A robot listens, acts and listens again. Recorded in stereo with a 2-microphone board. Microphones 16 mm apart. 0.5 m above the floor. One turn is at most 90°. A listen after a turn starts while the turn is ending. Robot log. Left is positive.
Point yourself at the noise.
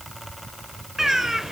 note: The bird: about 35° right or 145° right.
cmd yaw -35
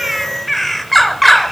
end: Facing the bird.